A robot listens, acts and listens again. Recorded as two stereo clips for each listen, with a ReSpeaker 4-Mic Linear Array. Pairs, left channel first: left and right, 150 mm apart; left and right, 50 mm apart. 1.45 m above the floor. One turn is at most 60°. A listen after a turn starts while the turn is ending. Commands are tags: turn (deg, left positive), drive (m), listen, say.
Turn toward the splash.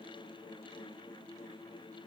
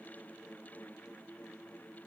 <listen/>
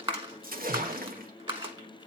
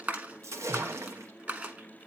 <turn deg="-60"/>
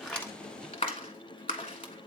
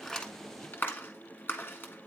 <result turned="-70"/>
<listen/>
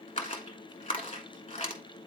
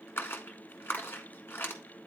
<say>I heard a splash, but can't make it out now. It was about 5° left or 45° right.</say>